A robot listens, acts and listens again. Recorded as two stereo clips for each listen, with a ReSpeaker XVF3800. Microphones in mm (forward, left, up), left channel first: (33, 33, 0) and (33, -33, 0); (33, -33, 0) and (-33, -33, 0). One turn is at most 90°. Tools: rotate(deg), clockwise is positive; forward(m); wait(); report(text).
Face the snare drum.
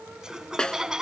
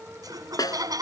rotate(-15)
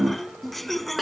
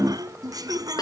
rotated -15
report("Facing the snare drum.")